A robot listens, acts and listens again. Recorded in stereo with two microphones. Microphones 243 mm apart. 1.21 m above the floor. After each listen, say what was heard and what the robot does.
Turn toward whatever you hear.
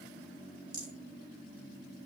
The rattle: about 70° right or 110° right. Turn 70° right.
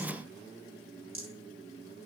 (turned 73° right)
So it is at 40° right. Turn 40° right.
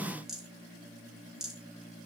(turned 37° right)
Facing the rattle.